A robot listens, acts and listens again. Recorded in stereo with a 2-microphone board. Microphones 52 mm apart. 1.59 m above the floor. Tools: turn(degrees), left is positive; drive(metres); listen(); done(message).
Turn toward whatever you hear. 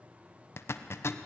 turn(degrees=55)
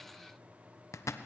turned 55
turn(degrees=70)
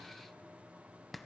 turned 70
done("Found it: a zipper, straight ahead, 1 to 2 m away.")